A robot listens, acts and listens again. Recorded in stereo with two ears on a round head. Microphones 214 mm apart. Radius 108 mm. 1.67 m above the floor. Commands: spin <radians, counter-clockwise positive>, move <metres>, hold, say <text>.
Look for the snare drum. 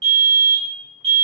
hold
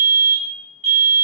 hold
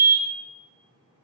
say I can't make out a snare drum, only a fire alarm.